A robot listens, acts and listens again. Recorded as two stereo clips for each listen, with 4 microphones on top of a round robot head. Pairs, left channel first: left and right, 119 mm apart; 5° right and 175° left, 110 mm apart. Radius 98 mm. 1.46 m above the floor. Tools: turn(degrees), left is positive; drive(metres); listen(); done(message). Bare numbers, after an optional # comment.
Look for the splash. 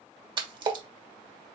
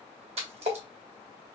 # The splash: 140° right.
turn(-140)
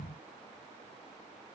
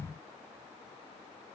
done("I heard a splash from this way, but can't make it out now.")